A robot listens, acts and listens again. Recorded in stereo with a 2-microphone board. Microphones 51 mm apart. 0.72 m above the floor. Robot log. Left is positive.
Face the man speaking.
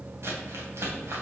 cmd idle
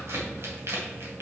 cmd idle
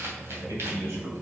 note: The man speaking: about 75° right or 105° right.
cmd yaw -75
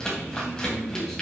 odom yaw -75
end: Found it: a man speaking, straight ahead, 2 to 4 m away.